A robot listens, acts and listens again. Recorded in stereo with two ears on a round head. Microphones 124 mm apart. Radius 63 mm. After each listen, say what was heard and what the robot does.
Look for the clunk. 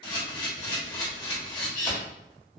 Keep listening.
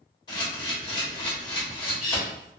Keep listening.
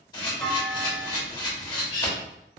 Turn 30° left.
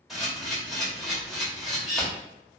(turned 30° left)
Keep listening.
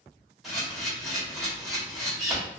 I heard a clunk, but can't make it out now. It was about 30° right or 150° left.